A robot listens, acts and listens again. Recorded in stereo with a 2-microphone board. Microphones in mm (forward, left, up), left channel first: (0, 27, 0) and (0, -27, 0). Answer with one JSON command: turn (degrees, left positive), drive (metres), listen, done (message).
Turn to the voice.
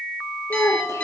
{"turn": 70}
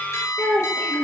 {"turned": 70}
{"turn": 40}
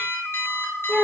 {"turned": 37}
{"done": "Facing the child speaking."}